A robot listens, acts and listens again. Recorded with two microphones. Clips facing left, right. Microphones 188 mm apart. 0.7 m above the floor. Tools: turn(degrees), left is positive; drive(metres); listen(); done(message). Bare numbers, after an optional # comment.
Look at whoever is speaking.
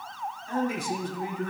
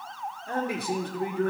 # The man speaking: about 60° right or 120° right.
turn(-60)
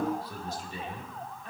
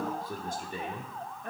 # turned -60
# So it is at 60° right.
turn(-60)
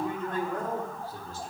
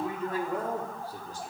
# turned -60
# The man speaking is now 15° right.
turn(-15)
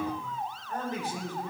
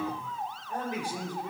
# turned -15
# The man speaking is now 15° right.
turn(-15)
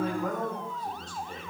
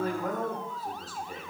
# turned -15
done("Found it: a man speaking, straight ahead.")